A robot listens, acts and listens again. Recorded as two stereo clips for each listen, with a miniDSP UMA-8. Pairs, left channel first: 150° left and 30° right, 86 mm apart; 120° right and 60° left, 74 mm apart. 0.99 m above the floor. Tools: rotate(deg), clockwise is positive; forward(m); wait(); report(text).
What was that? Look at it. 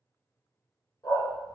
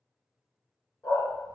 rotate(165)
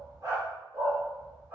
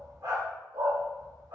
rotate(-35)
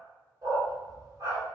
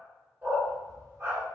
rotate(-10)
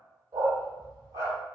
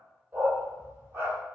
report("Found it: a dog barking, straight ahead.")